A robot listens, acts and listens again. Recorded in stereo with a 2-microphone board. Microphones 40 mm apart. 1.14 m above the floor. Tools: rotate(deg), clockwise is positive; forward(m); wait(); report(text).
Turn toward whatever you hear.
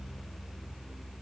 wait()
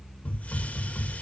rotate(-40)
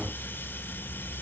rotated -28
wait()
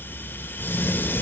rotate(-110)
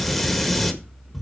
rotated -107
report("Facing the hiss.")